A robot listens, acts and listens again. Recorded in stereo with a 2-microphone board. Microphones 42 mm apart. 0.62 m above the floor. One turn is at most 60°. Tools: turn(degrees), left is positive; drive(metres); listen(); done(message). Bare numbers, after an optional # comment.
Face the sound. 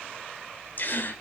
# The gasp: about 50° left or 130° left.
turn(50)
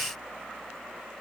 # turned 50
listen()
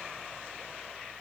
done("I heard a gasp, but can't make it out now. It was about straight ahead or 80° left.")